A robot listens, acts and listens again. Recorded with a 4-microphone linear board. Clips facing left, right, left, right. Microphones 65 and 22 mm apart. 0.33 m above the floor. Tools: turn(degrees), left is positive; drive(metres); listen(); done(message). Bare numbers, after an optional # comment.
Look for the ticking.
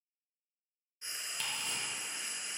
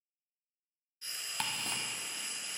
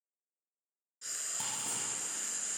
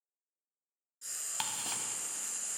# The ticking: about 60° right or 120° right.
turn(-60)
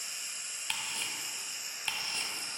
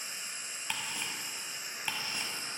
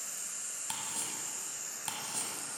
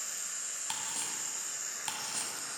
# So it is at 10° right.
turn(-10)
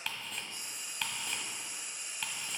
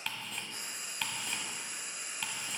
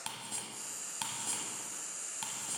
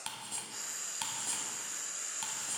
done("Found it: ticking, straight ahead.")